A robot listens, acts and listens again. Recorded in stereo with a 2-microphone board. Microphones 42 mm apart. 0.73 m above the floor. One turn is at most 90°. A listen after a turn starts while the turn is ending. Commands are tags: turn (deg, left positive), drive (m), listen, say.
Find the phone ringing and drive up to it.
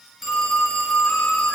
<turn deg="30"/>
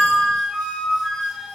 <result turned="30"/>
<listen/>
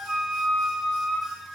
<listen/>
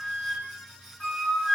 <say>I heard a phone ringing, but can't make it out now. It was about 30° right or 150° left. I did not reach it.</say>